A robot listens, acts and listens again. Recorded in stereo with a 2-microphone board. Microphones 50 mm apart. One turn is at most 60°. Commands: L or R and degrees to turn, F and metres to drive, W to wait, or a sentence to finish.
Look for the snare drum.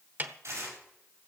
R40
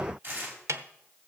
R60
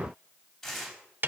R45
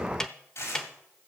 L10
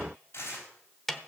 Found it: a snare drum, straight ahead, 1 to 2 m away.